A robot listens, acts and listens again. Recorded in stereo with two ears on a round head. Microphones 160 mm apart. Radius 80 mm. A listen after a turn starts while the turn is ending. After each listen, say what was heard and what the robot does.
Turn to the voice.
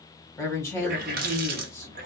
The woman speaking: about 15° left or 165° left. Turn 15° left.
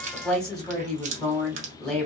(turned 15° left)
Facing the woman speaking.